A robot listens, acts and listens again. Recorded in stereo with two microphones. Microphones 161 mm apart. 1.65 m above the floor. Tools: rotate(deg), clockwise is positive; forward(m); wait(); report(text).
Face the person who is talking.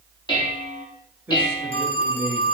rotate(15)
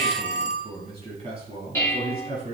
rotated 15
rotate(40)
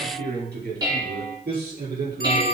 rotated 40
rotate(95)
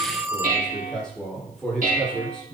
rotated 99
report("Found it: a man speaking, straight ahead.")